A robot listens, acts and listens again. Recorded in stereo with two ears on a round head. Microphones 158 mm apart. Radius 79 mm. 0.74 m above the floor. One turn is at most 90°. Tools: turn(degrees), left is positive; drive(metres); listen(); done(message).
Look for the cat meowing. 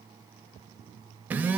listen()
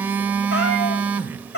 turn(degrees=70)
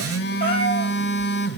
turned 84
listen()
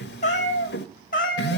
turn(degrees=55)
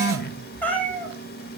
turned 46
turn(degrees=10)
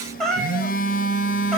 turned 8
done("Found it: a cat meowing, straight ahead, 2 to 4 m away.")